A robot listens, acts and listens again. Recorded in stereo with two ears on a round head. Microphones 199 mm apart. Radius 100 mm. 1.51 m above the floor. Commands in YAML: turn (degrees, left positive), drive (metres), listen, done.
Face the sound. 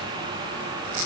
listen: true
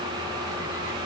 listen: true
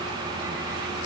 done: "I can't make out anything to turn to."